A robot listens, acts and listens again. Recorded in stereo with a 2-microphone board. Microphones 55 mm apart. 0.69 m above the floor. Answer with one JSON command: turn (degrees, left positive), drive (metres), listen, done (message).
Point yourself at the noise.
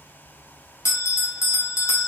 {"turn": 70}
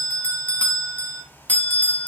{"turn": 30}
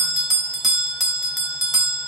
{"done": "Found it: a bell, straight ahead."}